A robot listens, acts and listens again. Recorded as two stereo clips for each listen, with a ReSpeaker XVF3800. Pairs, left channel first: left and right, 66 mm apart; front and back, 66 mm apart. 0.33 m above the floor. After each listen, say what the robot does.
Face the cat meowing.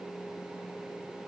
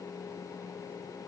Keep listening.
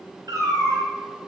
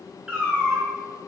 Turn 110° right.
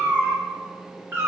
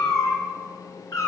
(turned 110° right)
Turn 35° right.
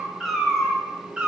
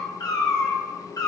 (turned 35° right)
Turn 15° right.
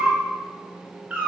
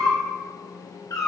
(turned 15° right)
Turn 25° right.
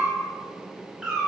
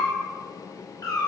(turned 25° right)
Turn 15° right.
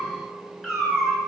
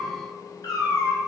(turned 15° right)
Found it: a cat meowing, straight ahead, 1 to 2 m away.